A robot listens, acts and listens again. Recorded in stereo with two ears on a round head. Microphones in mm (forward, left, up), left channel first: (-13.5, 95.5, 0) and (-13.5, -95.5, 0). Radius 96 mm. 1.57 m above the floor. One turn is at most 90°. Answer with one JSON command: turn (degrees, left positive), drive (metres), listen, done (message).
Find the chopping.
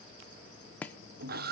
{"turn": 30}
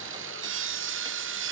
{"listen": true}
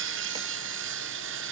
{"listen": true}
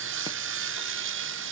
{"done": "I heard chopping, but can't make it out now. It was about 20° right or 140° left."}